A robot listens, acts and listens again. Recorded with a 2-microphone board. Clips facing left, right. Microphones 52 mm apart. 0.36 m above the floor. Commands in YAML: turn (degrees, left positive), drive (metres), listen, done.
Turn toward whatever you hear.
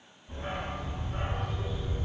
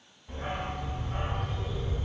turn: -65
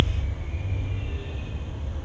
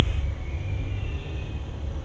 done: "Facing the dog barking, 1 to 2 m away."